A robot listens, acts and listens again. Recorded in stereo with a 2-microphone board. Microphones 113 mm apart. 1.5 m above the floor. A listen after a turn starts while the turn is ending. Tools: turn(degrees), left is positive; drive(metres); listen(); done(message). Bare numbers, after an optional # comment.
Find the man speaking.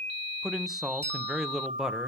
turn(-30)
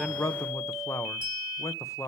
# So it is at 25° left.
turn(25)
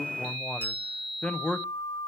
# The man speaking is now 10° left.
turn(10)
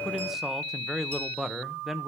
done("Found it: a man speaking, straight ahead, 1 to 2 m away.")